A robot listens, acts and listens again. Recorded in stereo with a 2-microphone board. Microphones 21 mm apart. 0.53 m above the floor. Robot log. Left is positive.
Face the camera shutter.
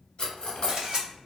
note: The camera shutter: about 45° right or 135° right.
cmd yaw -45
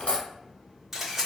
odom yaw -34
note: So it is at 15° right.
cmd yaw -15
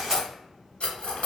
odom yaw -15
cmd idle
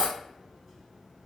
cmd idle
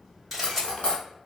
end: Facing the camera shutter, 1 to 2 m away.